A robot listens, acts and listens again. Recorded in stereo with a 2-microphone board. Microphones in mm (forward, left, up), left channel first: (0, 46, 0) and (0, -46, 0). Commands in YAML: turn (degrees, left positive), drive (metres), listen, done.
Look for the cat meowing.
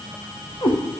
turn: 55
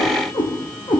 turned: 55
turn: 55
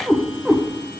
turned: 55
done: "Facing the cat meowing, 2 to 4 m away."